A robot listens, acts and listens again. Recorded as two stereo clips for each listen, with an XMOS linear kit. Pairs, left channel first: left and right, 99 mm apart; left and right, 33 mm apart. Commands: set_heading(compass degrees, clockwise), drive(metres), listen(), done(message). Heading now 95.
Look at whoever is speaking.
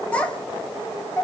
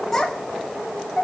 set_heading(65)
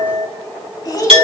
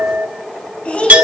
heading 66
set_heading(286)
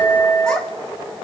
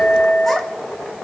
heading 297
set_heading(287)
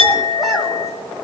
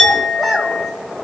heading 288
listen()
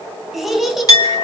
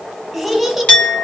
done("Found it: a child speaking, straight ahead, 2 to 4 m away.")